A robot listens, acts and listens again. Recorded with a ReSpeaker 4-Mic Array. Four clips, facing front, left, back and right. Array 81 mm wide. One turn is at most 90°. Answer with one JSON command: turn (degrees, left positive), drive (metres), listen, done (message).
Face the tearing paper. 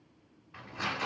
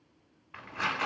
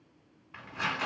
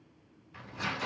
{"turn": 90}
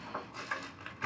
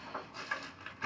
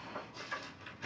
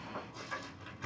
{"turn": 30}
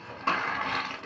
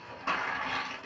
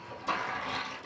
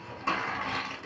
{"turn": -10}
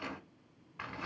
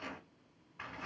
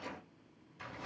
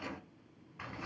{"done": "Found it: tearing paper, straight ahead, 1 to 2 m away."}